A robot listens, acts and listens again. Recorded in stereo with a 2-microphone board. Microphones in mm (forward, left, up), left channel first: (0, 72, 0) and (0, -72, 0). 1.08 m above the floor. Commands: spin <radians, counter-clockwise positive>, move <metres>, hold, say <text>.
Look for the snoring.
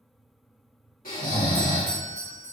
spin 1.57
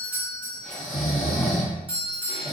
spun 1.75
say Facing the snoring, 1 to 2 m away.